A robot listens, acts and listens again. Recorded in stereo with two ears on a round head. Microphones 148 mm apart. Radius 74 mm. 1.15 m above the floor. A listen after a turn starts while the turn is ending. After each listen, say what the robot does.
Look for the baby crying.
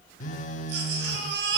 Turn 75° right.
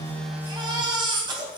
Turn 25° right.
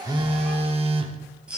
Facing the baby crying, 2 to 4 m away.